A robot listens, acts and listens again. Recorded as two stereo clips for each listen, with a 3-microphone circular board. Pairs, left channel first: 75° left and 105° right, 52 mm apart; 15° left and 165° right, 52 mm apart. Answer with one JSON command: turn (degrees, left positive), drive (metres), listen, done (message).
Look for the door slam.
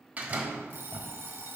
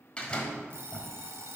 {"turn": -50}
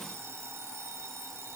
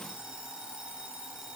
{"done": "I heard a door slam from this way, but can't make it out now."}